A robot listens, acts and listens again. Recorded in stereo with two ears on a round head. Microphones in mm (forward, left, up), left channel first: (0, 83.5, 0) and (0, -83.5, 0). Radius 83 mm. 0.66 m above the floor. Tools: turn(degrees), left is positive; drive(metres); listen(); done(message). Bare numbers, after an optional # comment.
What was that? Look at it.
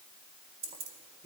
# The keys jangling: about 30° right or 150° right.
turn(-30)
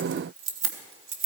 # So it is at 105° right.
turn(-105)
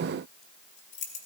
# The keys jangling is now 45° left.
turn(45)
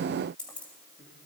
done("Found it: keys jangling, straight ahead.")